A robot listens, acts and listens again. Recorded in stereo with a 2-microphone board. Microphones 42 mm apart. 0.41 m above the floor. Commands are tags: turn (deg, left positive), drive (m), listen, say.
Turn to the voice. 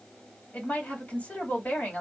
<turn deg="40"/>
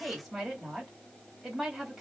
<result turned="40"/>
<say>Found it: a woman speaking, straight ahead.</say>